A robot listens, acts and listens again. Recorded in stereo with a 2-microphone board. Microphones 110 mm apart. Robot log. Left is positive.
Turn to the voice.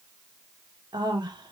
note: The woman speaking: about 40° right or 140° right.
cmd yaw -40
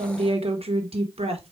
note: So it is at 95° right.
cmd yaw -95
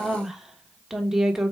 end: Facing the woman speaking.